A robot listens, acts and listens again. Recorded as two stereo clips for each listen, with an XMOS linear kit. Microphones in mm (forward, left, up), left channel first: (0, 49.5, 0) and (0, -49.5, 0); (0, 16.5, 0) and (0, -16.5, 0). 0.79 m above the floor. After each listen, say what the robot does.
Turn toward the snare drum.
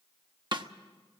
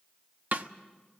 Turn 50° right.
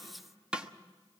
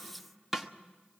Turn 10° right.
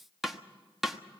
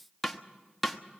Found it: a snare drum, straight ahead.